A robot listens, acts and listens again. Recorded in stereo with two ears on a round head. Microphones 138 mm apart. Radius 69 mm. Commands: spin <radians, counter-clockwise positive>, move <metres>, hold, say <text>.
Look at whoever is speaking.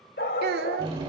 spin -1.22
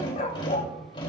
hold
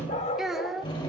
say Facing the child speaking, 1 to 2 m away.